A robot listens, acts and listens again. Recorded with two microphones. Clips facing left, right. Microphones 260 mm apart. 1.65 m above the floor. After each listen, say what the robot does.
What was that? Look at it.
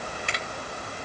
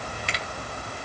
Turn 55° left.
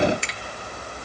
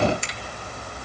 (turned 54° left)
Turn 70° left.
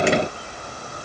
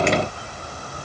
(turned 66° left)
Keep listening.
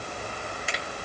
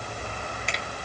Facing the finger snap.